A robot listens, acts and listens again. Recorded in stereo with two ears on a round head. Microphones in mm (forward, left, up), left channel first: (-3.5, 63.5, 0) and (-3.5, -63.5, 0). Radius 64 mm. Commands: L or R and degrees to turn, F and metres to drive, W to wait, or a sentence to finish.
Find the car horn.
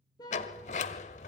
L30
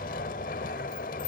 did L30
W
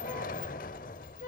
L120
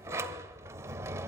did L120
W
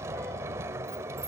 W
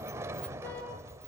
I heard a car horn from this way, but can't make it out now.